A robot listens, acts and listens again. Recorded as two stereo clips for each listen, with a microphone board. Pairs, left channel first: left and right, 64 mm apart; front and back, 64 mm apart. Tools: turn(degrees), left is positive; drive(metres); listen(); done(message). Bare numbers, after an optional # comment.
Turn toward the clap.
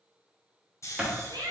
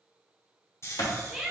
# The clap: 15° right.
turn(-15)
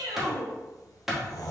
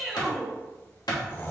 done("Facing the clap, 1 to 2 m away.")